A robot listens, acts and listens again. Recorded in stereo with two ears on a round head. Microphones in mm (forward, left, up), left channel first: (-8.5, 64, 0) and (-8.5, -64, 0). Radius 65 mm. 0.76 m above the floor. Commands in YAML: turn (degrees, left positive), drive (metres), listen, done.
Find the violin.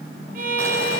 turn: -60
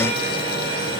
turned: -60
listen: true
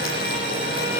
listen: true
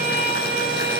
done: "Found it: a violin, straight ahead."